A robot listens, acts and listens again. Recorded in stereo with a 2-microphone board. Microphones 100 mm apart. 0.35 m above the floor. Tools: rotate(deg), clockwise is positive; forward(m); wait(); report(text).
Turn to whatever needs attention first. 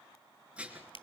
wait()
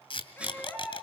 rotate(-15)
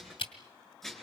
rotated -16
wait()
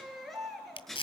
report("Found it: a baby crying, straight ahead, over 4 m away.")